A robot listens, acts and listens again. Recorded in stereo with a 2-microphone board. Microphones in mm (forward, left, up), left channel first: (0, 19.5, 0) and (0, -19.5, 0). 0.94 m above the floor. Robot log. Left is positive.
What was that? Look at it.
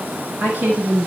note: The woman speaking: about 50° right or 130° right.
cmd yaw -50
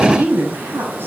note: So it is at 80° right.
cmd yaw -80
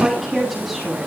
end: Facing the woman speaking, over 4 m away.